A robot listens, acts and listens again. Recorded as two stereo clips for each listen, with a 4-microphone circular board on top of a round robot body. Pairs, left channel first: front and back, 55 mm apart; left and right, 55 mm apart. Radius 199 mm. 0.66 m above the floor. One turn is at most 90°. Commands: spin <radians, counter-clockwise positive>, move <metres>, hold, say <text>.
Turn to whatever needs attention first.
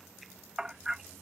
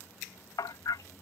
hold
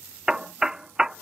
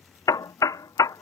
hold
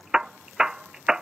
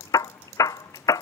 say I can't make out anything urgent to turn to.